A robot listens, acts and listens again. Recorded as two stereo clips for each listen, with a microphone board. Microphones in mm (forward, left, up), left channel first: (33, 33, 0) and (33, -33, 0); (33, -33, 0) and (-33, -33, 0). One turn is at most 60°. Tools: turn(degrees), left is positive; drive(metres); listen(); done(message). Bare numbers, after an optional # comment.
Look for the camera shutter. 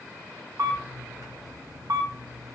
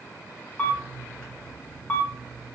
# The camera shutter: 70° right.
turn(-60)
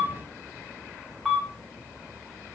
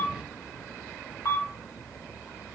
# The camera shutter is now 10° right.
turn(-10)
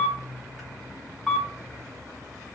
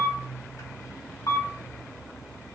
done("Found it: a camera shutter, straight ahead.")